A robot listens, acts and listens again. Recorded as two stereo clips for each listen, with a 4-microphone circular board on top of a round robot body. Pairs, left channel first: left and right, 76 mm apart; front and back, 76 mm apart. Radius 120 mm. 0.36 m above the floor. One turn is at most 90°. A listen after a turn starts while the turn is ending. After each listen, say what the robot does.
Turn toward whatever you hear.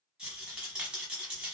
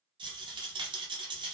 Turn 90° right.
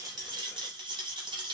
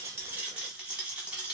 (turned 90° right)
Turn 90° right.
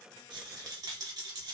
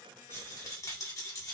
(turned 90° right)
Turn 50° right.
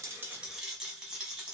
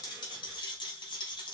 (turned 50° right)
Facing the rattle, under 1 m away.